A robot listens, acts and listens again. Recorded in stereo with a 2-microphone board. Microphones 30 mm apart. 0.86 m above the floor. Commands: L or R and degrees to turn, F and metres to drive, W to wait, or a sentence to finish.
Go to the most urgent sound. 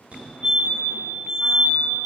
R50
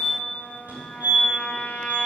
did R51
R70
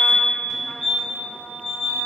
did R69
F1.0
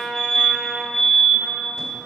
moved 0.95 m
F1.0
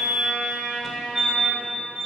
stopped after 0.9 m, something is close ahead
I am next to the fire alarm.